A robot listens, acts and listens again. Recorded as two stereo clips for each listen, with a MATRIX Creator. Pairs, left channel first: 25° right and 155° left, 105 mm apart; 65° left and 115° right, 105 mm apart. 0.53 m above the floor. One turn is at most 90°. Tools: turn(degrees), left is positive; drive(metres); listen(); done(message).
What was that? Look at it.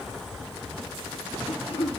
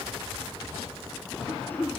done("Found it: throat clearing, straight ahead, 2 to 4 m away.")